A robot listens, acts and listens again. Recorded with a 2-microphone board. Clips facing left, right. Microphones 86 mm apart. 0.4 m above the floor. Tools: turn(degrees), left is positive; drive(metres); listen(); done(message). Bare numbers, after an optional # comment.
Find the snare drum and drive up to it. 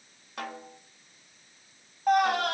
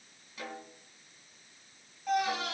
# The snare drum: about 65° left or 115° left.
turn(65)
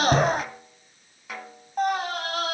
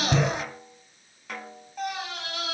drive(1.0)
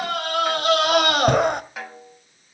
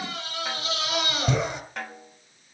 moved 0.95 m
drive(1.0)
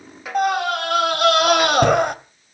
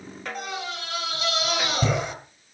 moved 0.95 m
drive(1.0)
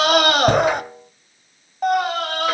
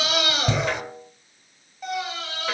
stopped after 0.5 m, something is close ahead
# The snare drum is now 10° left.
turn(10)
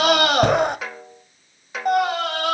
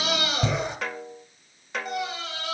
done("Arrived at the snare drum, straight ahead.")